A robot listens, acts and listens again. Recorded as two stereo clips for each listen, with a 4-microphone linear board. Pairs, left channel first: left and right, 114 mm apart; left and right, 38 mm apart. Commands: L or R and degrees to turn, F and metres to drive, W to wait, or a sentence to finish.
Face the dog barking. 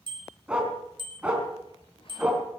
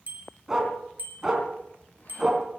R30
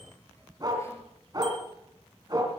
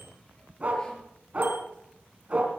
R145
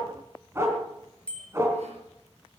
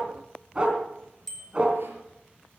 R25
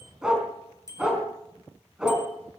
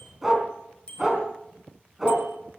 R10
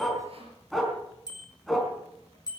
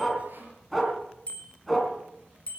Found it: a dog barking, straight ahead, 2 to 4 m away.